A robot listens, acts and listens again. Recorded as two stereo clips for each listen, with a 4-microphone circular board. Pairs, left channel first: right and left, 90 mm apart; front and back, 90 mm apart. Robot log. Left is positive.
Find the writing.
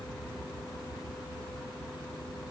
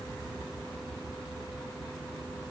cmd idle
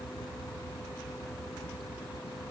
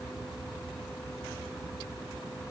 cmd idle
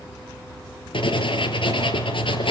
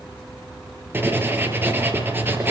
note: The writing: 115° right.
cmd yaw -115
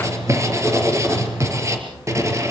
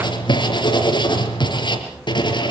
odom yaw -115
note: The writing is now 35° left.
cmd yaw +35
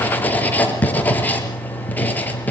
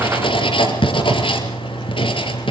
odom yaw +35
note: The writing is now 20° right.
cmd yaw -20
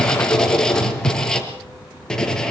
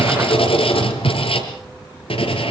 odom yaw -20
note: The writing is now 10° right.
cmd yaw -10
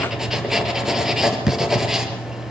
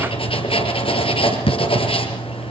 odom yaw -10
end: Found it: writing, straight ahead.